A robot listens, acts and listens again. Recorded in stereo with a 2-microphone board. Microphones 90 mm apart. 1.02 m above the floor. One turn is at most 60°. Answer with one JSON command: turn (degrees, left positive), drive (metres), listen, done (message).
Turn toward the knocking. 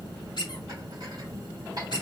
{"listen": true}
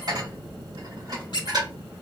{"listen": true}
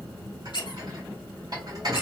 {"done": "I can't make out knocking, only dishes clattering."}